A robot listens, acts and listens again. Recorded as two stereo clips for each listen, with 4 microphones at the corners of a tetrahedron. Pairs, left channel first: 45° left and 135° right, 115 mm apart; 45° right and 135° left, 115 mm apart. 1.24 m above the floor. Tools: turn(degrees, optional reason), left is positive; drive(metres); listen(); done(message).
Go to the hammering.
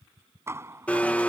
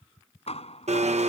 turn(degrees=-70, reason="The hammering: 70° right.")
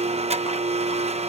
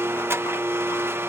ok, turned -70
listen()
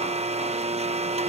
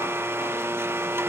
listen()
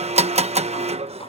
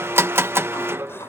done("I heard hammering from this way, but can't make it out now. I did not reach it.")